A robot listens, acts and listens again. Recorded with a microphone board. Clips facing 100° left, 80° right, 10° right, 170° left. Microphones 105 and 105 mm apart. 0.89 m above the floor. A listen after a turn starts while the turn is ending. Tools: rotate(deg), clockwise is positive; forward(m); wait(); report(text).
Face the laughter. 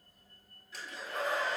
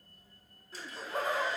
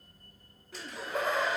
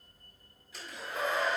rotate(35)
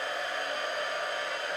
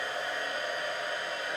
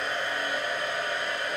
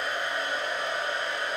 wait()
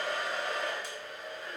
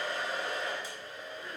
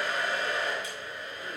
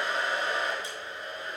wait()
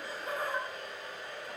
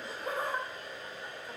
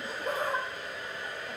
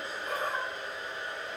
rotate(15)
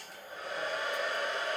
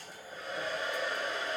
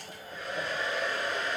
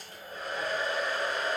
wait()
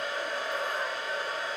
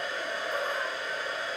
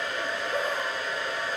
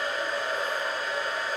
wait()
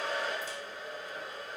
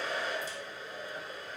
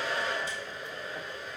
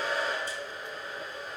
report("I heard laughter from this way, but can't make it out now.")